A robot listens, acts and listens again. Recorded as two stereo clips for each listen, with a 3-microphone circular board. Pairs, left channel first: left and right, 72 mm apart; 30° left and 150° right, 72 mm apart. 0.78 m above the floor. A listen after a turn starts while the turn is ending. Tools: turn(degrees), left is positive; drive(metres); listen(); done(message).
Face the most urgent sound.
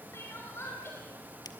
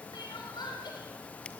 turn(degrees=35)
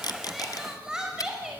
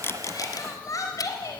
turn(degrees=-10)
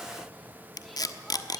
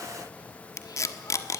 listen()
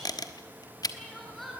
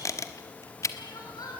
done("Facing the crying, over 4 m away.")